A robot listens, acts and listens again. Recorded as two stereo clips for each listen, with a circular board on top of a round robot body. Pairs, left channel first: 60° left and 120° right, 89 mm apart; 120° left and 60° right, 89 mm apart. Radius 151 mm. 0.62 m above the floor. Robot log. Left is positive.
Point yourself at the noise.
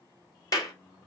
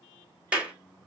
note: The clap: 15° left.
cmd yaw +15
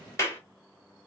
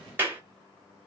end: Found it: a clap, straight ahead.